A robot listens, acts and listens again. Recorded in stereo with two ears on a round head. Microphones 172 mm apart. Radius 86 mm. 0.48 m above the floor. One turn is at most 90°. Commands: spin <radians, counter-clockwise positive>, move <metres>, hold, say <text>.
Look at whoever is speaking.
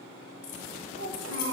spin -1.22
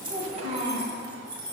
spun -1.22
spin -0.61
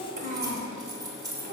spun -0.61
spin -0.79
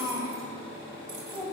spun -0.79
spin -0.26
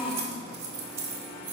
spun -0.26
say Found it: a child speaking, straight ahead, 1 to 2 m away.